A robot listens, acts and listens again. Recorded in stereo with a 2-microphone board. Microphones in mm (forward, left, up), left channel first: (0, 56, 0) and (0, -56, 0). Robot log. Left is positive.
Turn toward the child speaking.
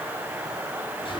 cmd idle
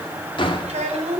cmd yaw -90
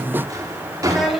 end: Found it: a child speaking, straight ahead.